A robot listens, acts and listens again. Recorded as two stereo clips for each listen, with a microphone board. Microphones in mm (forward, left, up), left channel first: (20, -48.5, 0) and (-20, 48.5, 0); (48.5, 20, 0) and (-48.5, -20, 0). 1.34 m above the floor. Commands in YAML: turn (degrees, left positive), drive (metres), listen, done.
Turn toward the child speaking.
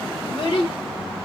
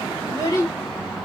turn: -35
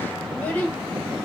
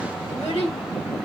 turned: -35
done: "Found it: a child speaking, straight ahead."